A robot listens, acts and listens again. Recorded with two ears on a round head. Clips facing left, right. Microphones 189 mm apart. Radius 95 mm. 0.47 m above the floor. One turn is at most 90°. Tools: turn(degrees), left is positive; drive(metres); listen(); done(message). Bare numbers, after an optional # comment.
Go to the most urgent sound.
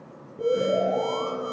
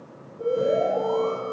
# The alarm: about 75° left or 105° left.
turn(75)
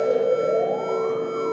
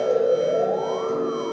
drive(1.0)
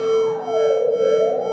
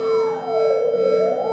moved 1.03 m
drive(1.0)
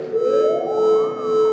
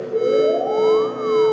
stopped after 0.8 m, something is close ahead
# The alarm is now 10° left.
turn(10)
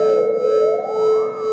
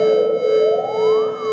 done("I am next to the alarm.")